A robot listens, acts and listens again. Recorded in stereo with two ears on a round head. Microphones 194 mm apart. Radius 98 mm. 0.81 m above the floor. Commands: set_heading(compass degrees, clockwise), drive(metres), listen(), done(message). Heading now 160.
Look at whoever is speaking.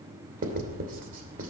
set_heading(185)
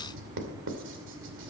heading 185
listen()
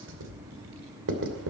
set_heading(300)
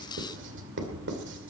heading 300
set_heading(335)
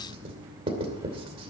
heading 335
listen()
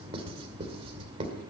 listen()
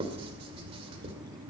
done("I heard a child speaking from this way, but can't make it out now.")